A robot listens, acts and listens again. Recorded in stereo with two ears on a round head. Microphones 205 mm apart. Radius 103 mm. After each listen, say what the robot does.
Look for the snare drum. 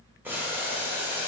Keep listening.
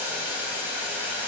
Keep listening.
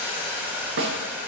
Turn 55° right.
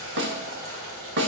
Turn 60° right.
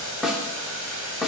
Found it: a snare drum, straight ahead.